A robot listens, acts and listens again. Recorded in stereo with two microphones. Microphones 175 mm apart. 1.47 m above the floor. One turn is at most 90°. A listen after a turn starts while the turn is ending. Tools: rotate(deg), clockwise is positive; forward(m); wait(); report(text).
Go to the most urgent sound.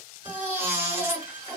rotate(30)
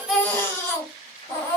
rotate(-15)
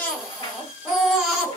forward(1.0)
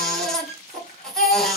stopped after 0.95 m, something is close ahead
report("I am next to the baby crying.")